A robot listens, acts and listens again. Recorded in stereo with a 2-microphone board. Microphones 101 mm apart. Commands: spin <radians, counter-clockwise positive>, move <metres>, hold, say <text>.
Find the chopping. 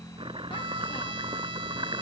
spin -0.96
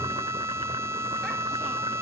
hold
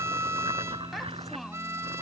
spin -1.13
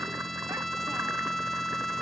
hold
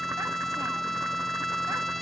hold
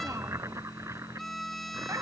spin -0.52
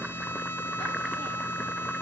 hold
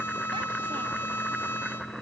say Facing the chopping.